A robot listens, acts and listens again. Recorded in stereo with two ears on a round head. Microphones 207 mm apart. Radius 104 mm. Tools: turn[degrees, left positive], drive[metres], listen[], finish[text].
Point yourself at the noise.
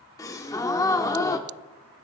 Action: turn[30]
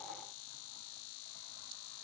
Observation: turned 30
Action: listen[]
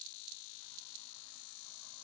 Action: finish[I heard a gasp, but can't make it out now. It was about 15° right or 135° left.]